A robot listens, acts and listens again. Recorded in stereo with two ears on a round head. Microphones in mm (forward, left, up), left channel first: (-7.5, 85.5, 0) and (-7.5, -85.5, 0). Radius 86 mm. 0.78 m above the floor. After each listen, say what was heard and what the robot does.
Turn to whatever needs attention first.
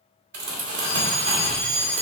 Turn 30° right.
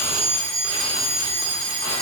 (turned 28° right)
So it is at 145° right. Turn 145° right.
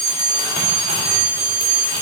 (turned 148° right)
Found it: a fire alarm, straight ahead, 2 to 4 m away.